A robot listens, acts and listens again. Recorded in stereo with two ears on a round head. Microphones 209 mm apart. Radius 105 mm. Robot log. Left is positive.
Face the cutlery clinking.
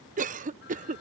cmd idle
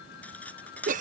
cmd yaw +30
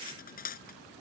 note: So it is at 140° left.
cmd yaw +140
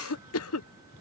cmd idle
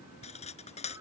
note: The cutlery clinking is now 30° left.
cmd yaw +30
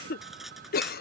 end: Facing the cutlery clinking.